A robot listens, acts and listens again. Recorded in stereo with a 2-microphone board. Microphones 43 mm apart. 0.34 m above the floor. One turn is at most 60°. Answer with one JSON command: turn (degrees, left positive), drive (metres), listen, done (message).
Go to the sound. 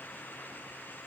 {"listen": true}
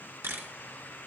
{"turn": -60}
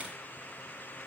{"listen": true}
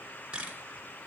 {"turn": -25}
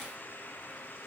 {"listen": true}
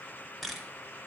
{"drive": 1.0}
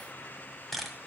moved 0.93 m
{"drive": 1.0}
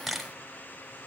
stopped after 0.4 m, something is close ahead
{"done": "I am next to the camera shutter."}